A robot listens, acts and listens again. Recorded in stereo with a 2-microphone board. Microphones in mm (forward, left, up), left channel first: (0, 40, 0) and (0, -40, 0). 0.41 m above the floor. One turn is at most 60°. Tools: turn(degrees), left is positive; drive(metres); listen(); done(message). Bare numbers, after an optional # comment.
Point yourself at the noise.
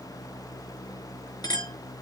# The clink: about 55° left or 125° left.
turn(55)
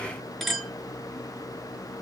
done("Found it: a clink, straight ahead, over 4 m away.")